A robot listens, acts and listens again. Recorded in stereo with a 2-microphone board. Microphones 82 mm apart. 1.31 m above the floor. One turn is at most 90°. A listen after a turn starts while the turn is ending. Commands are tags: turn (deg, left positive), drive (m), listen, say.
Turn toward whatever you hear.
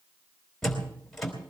<turn deg="30"/>
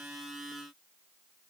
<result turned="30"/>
<listen/>
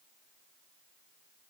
<say>I heard a door slam, but can't make it out now. It was about 25° right or 145° left.</say>